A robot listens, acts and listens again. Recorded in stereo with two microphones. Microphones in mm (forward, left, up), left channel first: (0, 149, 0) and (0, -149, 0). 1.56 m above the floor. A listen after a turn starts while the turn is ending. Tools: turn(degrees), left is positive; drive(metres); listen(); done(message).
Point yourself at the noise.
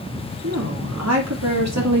turn(degrees=-65)
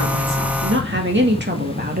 turn(degrees=-30)
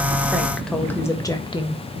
turn(degrees=20)
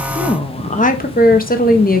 turn(degrees=30)
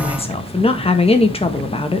turn(degrees=20)
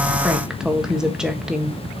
done("Found it: a woman speaking, straight ahead, 1 to 2 m away.")